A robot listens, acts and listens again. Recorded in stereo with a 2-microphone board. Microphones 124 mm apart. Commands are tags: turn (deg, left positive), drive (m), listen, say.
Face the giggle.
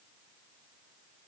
<listen/>
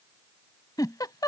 <turn deg="35"/>
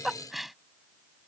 <say>Facing the giggle.</say>